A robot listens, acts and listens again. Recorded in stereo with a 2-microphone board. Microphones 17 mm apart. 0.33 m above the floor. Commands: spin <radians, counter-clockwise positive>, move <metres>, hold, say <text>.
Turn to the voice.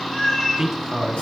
spin -0.52
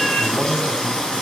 spin -0.17
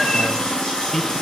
say Facing the man speaking, 1 to 2 m away.